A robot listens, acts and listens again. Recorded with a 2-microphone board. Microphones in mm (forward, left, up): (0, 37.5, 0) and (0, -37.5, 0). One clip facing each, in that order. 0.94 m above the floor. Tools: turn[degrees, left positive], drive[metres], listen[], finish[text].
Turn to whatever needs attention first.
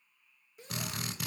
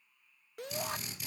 Thought: The shout: about 70° right or 110° right.
Action: turn[-70]
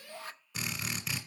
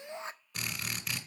Thought: So it is at 25° right.
Action: turn[-25]
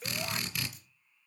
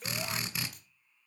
Action: finish[Found it: a shout, straight ahead, under 1 m away.]